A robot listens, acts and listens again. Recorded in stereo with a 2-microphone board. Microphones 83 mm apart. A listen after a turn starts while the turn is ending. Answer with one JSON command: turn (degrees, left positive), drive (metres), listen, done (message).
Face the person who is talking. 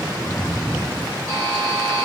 {"listen": true}
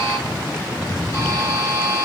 {"listen": true}
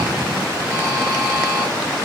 {"done": "I can't make out anyone speaking to turn to."}